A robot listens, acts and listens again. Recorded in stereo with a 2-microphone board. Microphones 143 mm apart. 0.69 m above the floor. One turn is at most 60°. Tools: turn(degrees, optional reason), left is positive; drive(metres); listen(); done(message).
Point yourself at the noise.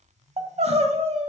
turn(degrees=-45, reason="The crying: about 45° right or 135° right.")
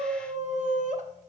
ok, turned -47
turn(degrees=-60, reason="So it is at 75° right.")
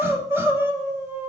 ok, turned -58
turn(degrees=-20, reason="The crying is now 20° right.")
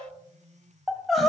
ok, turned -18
done("Found it: crying, straight ahead, under 1 m away.")